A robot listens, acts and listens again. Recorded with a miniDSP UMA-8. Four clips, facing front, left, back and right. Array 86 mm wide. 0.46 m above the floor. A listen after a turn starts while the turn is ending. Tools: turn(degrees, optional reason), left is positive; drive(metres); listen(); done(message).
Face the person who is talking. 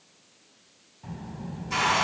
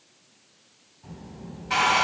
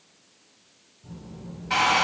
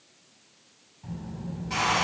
turn(degrees=-10, reason="The child speaking: 10° right.")
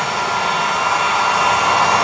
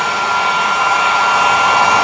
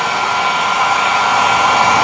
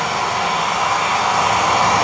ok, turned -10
listen()
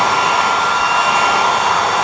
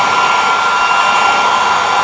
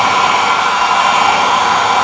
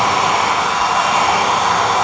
listen()
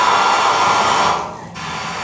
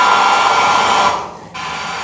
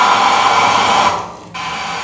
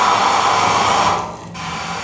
done("Facing the child speaking.")